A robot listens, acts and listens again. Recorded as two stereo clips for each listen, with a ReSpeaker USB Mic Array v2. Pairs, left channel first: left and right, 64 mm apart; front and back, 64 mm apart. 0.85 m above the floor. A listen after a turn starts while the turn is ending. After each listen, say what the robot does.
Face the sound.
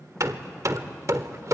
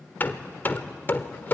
Turn 60° right.
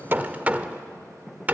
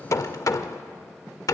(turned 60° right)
Turn 25° right.
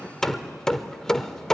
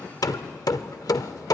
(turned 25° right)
Turn 10° left.
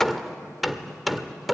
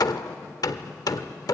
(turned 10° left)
Found it: hammering, straight ahead, 1 to 2 m away.